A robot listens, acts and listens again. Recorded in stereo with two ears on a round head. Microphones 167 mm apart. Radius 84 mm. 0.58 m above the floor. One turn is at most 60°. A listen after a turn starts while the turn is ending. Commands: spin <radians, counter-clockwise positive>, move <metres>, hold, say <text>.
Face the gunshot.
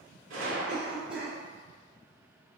spin -1.05
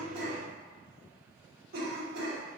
hold
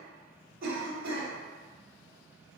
say I heard a gunshot, but can't make it out now. It was about 10° right or 50° right.